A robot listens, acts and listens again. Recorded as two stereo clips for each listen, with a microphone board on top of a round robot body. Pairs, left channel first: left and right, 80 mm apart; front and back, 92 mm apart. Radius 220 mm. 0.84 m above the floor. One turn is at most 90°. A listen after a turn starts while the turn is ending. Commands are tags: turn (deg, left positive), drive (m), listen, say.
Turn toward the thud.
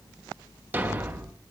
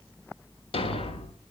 <turn deg="-25"/>
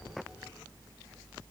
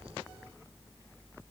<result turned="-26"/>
<say>I heard a thud from this way, but can't make it out now.</say>